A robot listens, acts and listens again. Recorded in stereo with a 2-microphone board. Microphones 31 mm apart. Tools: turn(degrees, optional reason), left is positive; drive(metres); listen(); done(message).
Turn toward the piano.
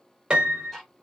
turn(degrees=-35, reason="The piano: about 35° right or 145° right.")
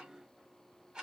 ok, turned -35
listen()
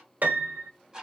turn(degrees=-110, reason="So it is at 110° right.")
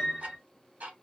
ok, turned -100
turn(degrees=-10, reason="The piano is now 10° right.")
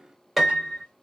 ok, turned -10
done("Facing the piano.")